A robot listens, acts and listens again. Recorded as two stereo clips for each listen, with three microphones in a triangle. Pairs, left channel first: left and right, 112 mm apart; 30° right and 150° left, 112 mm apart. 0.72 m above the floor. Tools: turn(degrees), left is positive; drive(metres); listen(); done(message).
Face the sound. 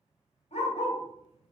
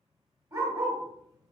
turn(degrees=95)
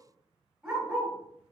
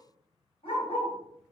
done("Found it: a dog barking, straight ahead, 1 to 2 m away.")